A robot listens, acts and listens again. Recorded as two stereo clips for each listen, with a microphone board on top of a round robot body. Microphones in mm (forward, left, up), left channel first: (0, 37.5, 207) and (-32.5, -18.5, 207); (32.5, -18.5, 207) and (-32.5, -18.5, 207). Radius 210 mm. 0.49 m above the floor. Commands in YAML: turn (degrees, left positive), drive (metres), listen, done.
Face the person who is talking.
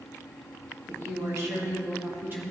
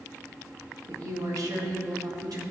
turn: -175
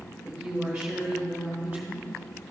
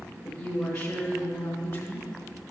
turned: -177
turn: -45
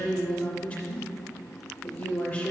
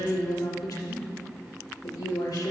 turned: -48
done: "Facing the woman speaking, 2 to 4 m away."